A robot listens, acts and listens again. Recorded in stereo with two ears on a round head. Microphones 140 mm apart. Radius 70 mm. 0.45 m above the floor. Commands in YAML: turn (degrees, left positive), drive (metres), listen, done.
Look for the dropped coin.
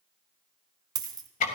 turn: -25
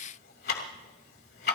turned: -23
listen: true
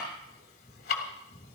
done: "I heard a dropped coin, but can't make it out now. It was about straight ahead or 135° right."